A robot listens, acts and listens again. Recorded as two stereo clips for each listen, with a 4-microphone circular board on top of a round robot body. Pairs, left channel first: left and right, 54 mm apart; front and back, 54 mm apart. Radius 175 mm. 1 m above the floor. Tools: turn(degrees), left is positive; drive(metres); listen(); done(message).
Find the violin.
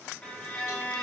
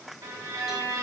turn(degrees=165)
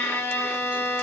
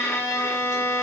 turn(degrees=40)
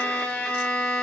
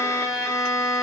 turn(degrees=20)
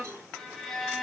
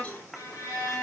done("Found it: a violin, straight ahead.")